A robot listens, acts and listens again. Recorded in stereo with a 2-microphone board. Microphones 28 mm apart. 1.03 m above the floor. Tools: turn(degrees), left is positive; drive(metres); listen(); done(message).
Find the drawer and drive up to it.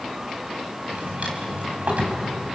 turn(degrees=-60)
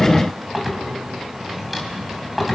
drive(metres=1.0)
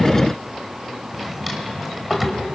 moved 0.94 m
drive(metres=1.0)
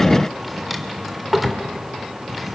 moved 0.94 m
drive(metres=1.0)
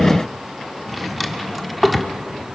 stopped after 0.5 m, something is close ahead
done("I am next to the drawer.")